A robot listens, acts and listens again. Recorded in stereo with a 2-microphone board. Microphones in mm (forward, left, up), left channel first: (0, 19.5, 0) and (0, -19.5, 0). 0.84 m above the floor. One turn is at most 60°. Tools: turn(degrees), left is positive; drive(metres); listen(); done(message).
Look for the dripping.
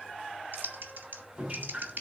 turn(degrees=-25)
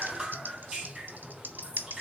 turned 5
turn(degrees=-20)
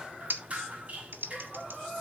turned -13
turn(degrees=-60)
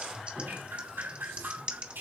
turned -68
turn(degrees=-60)
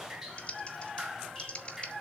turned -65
turn(degrees=-10)
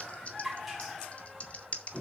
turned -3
done("Found it: dripping, straight ahead.")